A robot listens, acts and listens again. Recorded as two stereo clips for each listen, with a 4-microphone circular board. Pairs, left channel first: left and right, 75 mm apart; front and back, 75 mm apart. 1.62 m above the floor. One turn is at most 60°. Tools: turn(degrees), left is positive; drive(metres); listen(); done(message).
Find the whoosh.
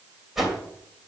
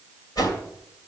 done("Found it: a whoosh, straight ahead.")